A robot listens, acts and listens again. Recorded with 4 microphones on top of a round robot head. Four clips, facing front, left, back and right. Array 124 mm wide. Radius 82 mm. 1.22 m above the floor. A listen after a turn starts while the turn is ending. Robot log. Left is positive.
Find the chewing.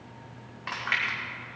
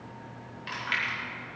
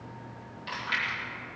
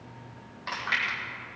note: The chewing: 35° right.
cmd yaw -35
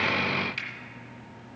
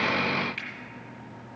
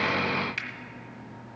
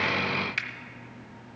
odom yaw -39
cmd idle
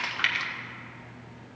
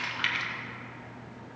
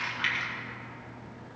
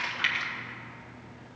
end: Found it: chewing, straight ahead, 1 to 2 m away.